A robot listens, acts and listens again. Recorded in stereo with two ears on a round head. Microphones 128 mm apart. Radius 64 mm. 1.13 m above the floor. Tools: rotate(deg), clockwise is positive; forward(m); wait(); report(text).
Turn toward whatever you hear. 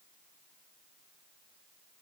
wait()
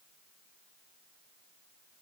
wait()
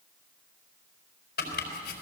rotate(-90)
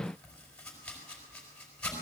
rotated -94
report("Facing the chopping, over 4 m away.")